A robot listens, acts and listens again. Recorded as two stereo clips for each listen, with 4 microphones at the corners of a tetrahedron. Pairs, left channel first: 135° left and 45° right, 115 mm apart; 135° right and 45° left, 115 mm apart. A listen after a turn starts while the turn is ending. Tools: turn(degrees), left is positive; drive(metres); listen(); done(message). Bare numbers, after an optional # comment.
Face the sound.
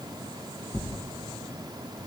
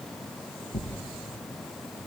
# The tearing paper: 145° right.
turn(-145)
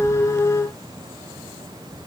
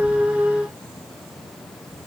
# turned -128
# Nothing new. It was at 15° right.
turn(-15)
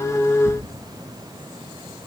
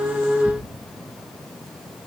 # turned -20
listen()
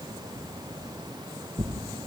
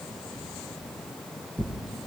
done("Facing the tearing paper, 2 to 4 m away.")